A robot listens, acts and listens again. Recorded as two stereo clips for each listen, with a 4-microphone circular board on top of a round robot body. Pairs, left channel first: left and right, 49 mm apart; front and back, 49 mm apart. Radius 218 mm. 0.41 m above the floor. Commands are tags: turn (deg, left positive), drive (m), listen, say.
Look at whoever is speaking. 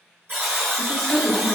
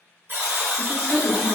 <turn deg="160"/>
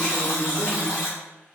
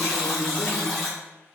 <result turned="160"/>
<turn deg="20"/>
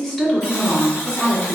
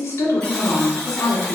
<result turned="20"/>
<turn deg="10"/>
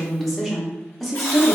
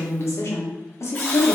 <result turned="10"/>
<say>Found it: a woman speaking, straight ahead, 1 to 2 m away.</say>